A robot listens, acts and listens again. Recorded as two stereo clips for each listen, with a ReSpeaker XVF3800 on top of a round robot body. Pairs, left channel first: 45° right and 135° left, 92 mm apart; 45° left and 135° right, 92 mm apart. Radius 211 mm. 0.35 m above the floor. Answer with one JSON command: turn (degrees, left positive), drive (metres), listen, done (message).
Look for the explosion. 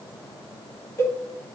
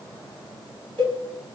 {"listen": true}
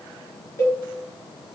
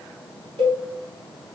{"listen": true}
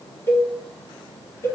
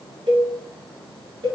{"done": "I can't make out an explosion to turn to."}